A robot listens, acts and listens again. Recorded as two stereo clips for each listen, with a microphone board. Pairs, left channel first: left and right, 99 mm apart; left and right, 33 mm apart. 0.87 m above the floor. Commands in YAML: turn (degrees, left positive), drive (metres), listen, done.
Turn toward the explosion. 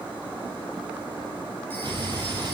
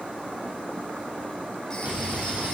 turn: -55
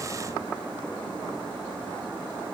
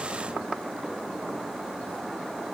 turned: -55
listen: true
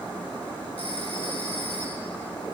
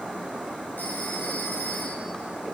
done: "I heard an explosion, but can't make it out now. It was about straight ahead or 70° right."